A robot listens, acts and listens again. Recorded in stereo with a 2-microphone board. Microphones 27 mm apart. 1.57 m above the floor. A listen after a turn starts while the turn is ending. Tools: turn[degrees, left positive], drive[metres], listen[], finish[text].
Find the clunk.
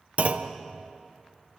Thought: The clunk: about 50° right or 130° right.
Action: turn[-50]
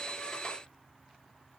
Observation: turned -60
Action: listen[]
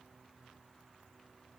Action: finish[I heard a clunk, but can't make it out now. It was about 10° left or 70° right.]